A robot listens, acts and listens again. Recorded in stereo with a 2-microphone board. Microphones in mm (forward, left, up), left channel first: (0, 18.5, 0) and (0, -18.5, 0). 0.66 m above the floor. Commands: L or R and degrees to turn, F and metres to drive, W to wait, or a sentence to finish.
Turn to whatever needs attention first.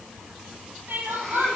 R65
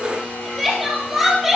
Facing the crying, 2 to 4 m away.